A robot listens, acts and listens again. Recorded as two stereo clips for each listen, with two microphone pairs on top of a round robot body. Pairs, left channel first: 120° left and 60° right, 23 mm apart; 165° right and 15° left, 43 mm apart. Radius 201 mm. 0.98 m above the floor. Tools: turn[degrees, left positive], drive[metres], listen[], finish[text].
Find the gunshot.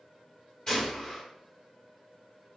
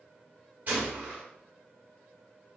Thought: The gunshot: 65° left.
Action: turn[65]
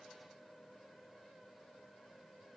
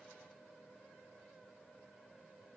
Action: finish[Facing where the gunshot came from. I can't hear it now.]